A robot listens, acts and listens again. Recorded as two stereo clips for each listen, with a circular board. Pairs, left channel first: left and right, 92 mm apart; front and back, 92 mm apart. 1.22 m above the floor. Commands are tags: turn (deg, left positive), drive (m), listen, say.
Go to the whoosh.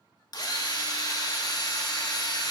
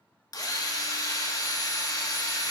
<listen/>
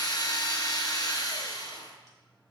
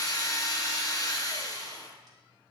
<listen/>
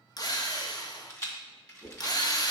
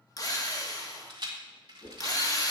<drive m="1.0"/>
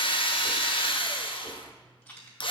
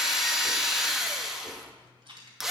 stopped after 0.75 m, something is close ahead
<listen/>
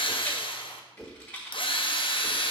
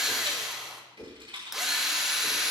<say>Arrived at the whoosh, straight ahead.</say>